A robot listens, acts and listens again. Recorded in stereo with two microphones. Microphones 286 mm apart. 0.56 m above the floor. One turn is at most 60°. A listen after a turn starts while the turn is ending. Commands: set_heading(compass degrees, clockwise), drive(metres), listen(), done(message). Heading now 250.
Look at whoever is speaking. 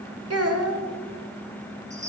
set_heading(305)
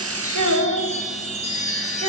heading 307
set_heading(7)
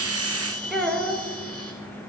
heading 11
done("Found it: a child speaking, straight ahead, 1 to 2 m away.")